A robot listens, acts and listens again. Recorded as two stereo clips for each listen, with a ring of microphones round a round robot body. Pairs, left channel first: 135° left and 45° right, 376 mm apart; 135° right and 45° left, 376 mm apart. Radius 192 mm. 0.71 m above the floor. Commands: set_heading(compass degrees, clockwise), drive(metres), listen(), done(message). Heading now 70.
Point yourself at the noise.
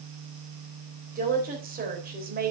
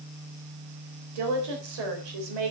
set_heading(50)
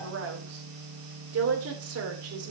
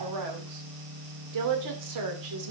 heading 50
done("Facing the woman speaking.")